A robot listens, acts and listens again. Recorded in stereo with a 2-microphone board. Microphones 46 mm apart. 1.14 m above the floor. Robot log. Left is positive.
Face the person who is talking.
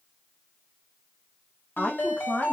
note: The woman speaking: about 25° left or 155° left.
cmd yaw +25
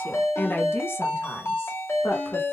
note: So it is at 115° left.
cmd yaw +115
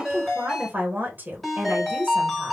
note: The woman speaking is now 40° right.
cmd yaw -40
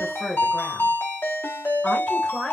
note: The woman speaking is now 10° left.
cmd yaw +10
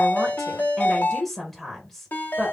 end: Facing the woman speaking.